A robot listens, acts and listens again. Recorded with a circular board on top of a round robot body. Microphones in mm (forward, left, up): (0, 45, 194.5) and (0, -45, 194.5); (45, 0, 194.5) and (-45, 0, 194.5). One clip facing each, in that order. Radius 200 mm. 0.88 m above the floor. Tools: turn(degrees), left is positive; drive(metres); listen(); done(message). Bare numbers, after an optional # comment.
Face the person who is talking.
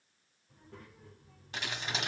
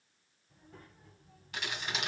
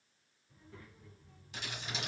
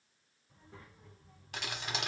# The child speaking: 115° left.
turn(115)
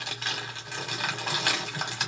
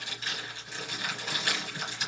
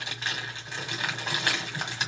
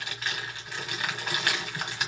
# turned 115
listen()
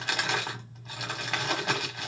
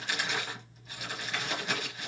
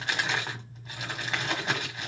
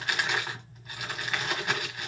listen()
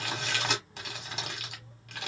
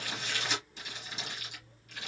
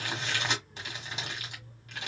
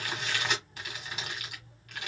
# The child speaking is now 25° left.
turn(25)
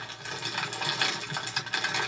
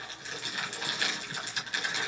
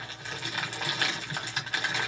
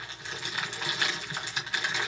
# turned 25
listen()
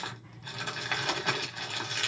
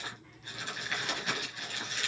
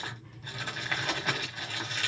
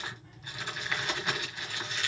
listen()
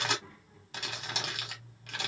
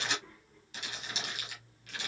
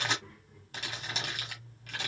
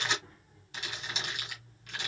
# The child speaking is now 10° left.
turn(10)
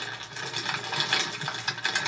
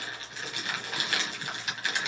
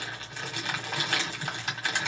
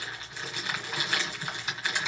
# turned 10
listen()
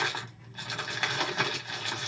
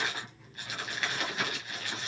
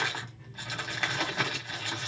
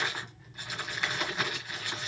listen()
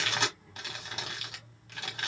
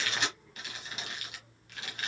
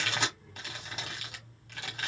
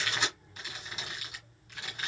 done("Facing the child speaking.")